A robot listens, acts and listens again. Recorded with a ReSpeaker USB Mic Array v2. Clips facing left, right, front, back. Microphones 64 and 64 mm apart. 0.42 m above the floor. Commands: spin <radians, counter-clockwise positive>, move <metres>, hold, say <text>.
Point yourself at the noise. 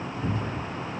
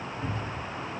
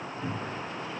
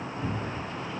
spin -2.09
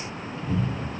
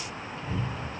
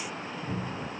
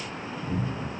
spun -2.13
say Facing the cupboard door, under 1 m away.